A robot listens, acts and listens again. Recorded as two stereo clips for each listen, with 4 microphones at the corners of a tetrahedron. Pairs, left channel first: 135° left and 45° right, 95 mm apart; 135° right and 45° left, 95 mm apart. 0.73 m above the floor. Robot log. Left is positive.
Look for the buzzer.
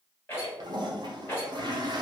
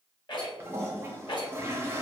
cmd idle
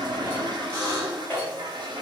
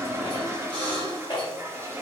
note: The buzzer: 15° left.
cmd yaw +15
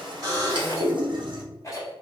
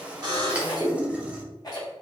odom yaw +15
end: Facing the buzzer, 1 to 2 m away.